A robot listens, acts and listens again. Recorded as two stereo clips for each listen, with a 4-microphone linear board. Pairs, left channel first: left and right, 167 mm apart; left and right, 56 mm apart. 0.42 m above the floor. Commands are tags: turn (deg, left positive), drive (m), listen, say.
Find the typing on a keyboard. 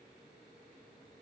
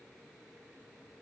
<listen/>
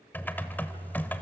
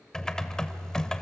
<turn deg="30"/>
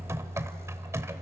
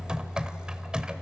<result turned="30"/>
<turn deg="-20"/>
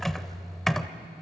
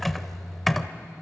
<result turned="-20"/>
<say>Facing the typing on a keyboard.</say>